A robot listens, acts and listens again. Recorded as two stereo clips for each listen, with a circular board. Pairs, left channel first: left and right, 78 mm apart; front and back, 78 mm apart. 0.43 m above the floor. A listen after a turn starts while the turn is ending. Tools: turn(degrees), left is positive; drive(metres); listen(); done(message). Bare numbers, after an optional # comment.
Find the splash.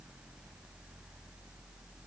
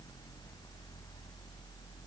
listen()
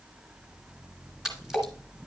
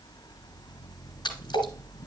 done("Found it: a splash, straight ahead, 2 to 4 m away.")